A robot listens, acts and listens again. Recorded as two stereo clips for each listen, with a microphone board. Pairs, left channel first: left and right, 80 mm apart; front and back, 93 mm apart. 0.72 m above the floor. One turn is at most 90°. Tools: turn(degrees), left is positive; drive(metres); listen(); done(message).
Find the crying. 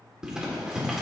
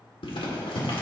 listen()
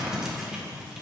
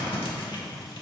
listen()
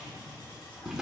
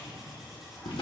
done("I can't make out crying to turn to.")